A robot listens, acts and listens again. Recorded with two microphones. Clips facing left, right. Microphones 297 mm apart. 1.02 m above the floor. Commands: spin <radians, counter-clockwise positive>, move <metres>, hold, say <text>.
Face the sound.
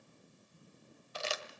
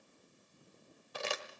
spin -1.05
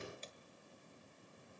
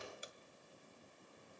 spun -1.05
hold
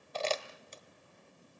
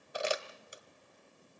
spin -0.26
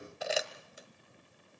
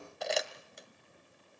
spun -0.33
say Facing the crumpling.